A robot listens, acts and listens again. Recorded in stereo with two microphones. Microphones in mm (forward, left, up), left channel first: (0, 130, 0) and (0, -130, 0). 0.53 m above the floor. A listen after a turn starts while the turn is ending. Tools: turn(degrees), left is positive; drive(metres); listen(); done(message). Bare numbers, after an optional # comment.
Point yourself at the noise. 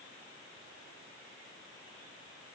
listen()
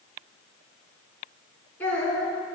turn(30)
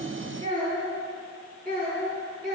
# So it is at 40° right.
turn(-40)
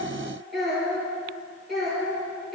done("Facing the child speaking.")